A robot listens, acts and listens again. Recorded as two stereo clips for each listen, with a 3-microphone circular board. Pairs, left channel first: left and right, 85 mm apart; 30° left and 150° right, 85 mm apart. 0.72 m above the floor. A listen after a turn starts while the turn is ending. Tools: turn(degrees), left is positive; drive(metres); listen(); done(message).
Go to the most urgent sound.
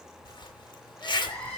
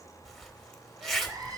turn(degrees=165)
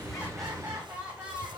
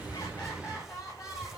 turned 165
turn(degrees=-20)
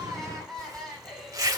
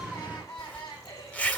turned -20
drive(metres=1.0)
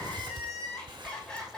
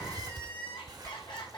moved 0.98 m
turn(degrees=10)
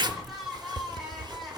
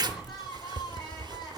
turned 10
drive(metres=1.0)
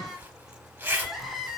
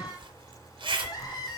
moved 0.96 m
drive(metres=1.0)
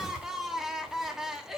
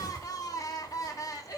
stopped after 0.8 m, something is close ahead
done("Arrived at the crying, straight ahead.")